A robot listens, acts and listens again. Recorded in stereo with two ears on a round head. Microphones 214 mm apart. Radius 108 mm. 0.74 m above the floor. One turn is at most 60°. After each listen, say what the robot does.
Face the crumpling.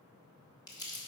Turn 20° left.
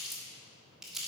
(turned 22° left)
Facing the crumpling, 1 to 2 m away.